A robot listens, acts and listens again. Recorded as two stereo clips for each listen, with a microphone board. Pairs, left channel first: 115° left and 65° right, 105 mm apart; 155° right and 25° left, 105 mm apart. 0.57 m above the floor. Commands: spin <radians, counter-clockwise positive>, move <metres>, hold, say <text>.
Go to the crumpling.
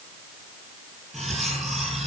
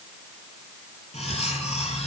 hold
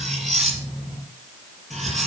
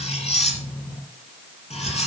hold
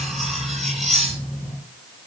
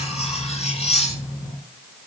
say I can't make out crumpling, only cutlery clinking.